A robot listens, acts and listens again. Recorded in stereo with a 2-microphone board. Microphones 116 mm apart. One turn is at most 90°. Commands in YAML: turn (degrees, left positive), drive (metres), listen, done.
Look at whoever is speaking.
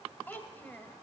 turn: 15
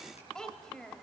done: "Found it: a child speaking, straight ahead."